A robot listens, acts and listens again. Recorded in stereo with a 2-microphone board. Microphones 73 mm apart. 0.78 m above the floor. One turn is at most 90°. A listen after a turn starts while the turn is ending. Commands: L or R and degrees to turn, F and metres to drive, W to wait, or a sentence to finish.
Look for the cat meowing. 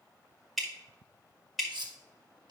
W
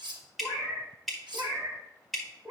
R30
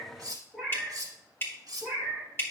Facing the cat meowing.